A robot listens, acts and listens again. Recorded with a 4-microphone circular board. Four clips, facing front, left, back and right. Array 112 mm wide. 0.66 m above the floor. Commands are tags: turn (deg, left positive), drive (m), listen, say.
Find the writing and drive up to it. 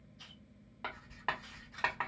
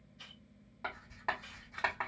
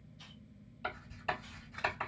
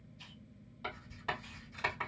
<turn deg="30"/>
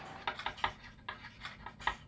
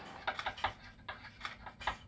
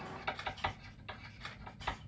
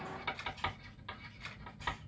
<drive m="1.0"/>
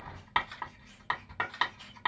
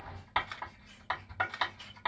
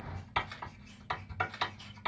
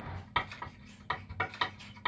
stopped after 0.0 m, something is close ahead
<say>Something is in my way. I am facing the writing but have not reached it.</say>